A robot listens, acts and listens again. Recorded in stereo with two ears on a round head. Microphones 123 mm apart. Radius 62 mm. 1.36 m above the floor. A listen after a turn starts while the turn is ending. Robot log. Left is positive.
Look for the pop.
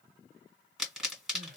cmd yaw -30
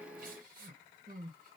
cmd idle
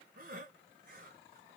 end: I heard a pop, but can't make it out now. It was about 25° left or 145° right.